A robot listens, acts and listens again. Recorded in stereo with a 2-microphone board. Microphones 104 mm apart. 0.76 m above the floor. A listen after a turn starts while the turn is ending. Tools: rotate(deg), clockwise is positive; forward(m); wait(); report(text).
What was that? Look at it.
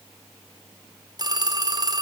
rotate(40)
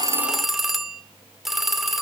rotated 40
report("Found it: a phone ringing, straight ahead.")